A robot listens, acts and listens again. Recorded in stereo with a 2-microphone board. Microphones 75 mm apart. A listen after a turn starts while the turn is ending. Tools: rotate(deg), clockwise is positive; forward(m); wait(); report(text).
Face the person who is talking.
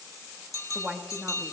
rotate(15)
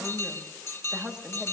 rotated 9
rotate(30)
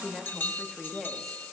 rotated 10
report("Facing the woman speaking, 1 to 2 m away.")